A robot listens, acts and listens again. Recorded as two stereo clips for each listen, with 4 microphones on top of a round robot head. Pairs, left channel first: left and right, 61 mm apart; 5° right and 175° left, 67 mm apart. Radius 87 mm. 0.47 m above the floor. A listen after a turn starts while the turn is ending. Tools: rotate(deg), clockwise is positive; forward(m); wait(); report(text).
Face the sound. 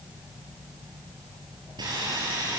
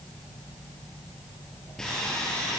rotate(90)
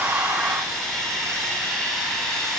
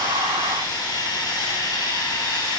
report("Found it: sawing, straight ahead, over 4 m away.")